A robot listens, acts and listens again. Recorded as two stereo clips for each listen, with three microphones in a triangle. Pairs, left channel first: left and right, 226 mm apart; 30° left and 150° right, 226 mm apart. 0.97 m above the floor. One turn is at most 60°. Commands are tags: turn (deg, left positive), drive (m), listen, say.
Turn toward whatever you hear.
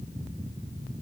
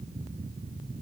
<listen/>
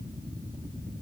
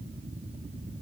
<listen/>
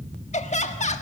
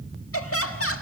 <turn deg="35"/>
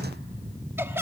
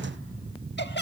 <turn deg="-10"/>
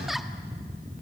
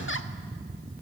<listen/>
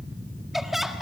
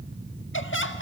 <say>Found it: laughter, straight ahead.</say>